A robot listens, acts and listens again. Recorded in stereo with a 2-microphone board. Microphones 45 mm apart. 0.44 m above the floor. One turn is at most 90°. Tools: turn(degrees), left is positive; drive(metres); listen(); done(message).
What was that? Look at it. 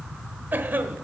turn(degrees=-50)
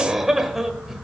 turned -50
turn(degrees=-10)
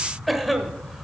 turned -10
done("Facing the cough.")